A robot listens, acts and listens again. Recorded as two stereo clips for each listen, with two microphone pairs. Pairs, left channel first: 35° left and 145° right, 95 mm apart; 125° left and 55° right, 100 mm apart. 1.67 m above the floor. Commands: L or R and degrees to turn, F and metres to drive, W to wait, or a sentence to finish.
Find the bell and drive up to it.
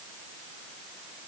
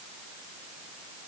W
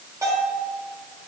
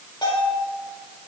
L160
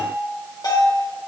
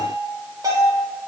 F1.0
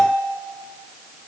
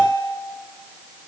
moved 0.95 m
R10
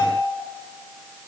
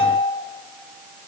F1.0
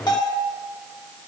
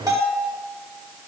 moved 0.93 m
F1.0
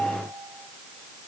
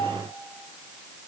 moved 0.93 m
F1.0
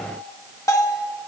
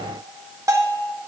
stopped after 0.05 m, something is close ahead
Arrived at the bell, straight ahead.